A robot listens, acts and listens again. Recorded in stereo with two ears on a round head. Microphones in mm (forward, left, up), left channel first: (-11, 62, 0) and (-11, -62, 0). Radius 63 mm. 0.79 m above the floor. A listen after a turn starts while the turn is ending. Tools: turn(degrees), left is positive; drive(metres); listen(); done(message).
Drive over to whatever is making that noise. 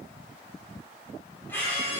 turn(degrees=15)
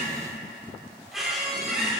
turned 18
drive(metres=1.0)
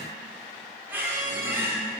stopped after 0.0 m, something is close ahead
turn(degrees=-15)
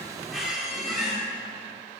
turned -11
done("Blocked. The squeak is further on, straight ahead.")